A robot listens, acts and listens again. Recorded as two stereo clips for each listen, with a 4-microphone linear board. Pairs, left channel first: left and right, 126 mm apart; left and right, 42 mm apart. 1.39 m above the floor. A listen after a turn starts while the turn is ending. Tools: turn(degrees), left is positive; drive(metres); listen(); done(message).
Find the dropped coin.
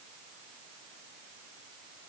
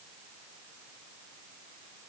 listen()
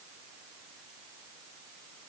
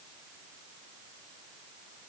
listen()
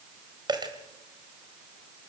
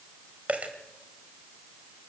turn(degrees=-35)
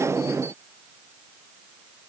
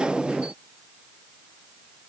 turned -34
listen()
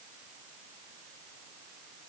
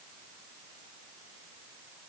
done("I heard a dropped coin, but can't make it out now. It was about straight ahead or 110° right.")